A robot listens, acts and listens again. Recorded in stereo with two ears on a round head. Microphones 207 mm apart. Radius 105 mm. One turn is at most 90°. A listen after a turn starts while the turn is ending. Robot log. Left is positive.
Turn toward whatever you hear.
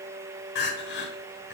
note: The crying: about 50° left or 130° left.
cmd yaw +50
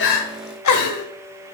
note: So it is at 80° left.
cmd yaw +80
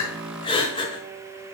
note: The crying is now 20° left.
cmd yaw +20
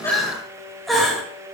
end: Facing the crying, 1 to 2 m away.